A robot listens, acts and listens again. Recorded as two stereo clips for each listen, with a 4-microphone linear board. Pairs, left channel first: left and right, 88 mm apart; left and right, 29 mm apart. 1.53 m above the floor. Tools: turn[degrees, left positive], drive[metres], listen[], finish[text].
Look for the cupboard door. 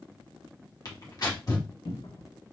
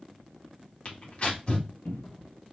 Action: turn[90]
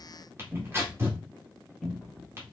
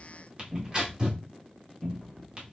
Action: finish[Facing the cupboard door.]